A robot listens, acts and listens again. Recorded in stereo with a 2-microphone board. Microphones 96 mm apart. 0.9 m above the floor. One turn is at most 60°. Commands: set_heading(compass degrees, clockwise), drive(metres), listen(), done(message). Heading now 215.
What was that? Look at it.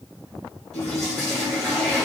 set_heading(185)
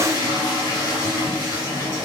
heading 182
set_heading(122)
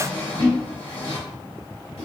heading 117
set_heading(57)
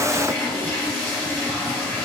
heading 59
set_heading(39)
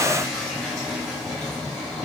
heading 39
done("Facing the toilet flushing.")